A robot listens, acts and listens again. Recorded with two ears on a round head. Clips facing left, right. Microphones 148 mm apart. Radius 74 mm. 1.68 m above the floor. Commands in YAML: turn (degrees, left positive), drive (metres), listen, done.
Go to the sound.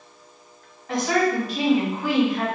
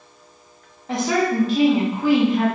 turn: -25
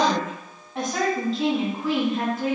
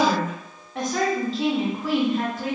drive: 1.0
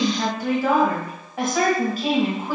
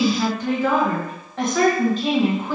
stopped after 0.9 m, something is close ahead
turn: 10
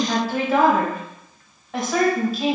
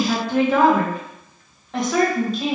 done: "Arrived at the woman speaking, straight ahead."